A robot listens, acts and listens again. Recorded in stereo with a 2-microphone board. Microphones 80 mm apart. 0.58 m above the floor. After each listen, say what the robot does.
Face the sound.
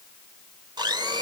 Turn 65° right.
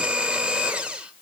Turn 10° right.
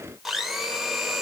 Facing the blender, 1 to 2 m away.